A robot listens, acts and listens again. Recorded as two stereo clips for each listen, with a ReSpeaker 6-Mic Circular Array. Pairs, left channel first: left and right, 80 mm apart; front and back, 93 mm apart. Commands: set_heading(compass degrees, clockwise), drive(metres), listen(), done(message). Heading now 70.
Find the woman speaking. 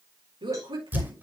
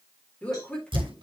set_heading(145)
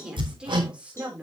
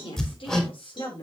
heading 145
set_heading(160)
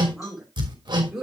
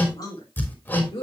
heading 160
set_heading(170)
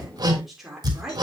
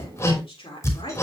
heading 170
done("Found it: a woman speaking, straight ahead, 2 to 4 m away.")